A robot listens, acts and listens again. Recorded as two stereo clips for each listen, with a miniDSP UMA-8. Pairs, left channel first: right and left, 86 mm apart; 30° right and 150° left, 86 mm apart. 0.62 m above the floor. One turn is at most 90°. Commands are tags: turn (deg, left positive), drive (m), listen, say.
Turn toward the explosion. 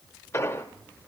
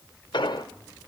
<turn deg="-35"/>
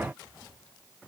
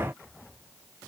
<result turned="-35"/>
<say>Facing where the explosion came from. I can't hear it now.</say>